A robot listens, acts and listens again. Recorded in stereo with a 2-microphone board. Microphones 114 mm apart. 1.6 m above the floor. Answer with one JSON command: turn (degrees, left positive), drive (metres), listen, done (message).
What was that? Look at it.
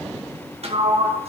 {"turn": -60}
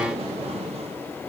{"turn": -60}
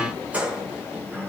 {"turn": -10}
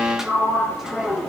{"done": "Found it: a sliding door, straight ahead."}